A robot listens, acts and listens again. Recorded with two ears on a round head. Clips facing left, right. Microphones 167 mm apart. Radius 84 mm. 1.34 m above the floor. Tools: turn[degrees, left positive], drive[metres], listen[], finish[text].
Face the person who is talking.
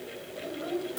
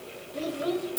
Thought: The child speaking: about 60° right or 120° right.
Action: turn[-60]
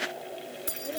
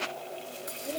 Action: listen[]
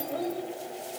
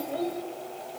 Action: finish[Found it: a child speaking, straight ahead, 2 to 4 m away.]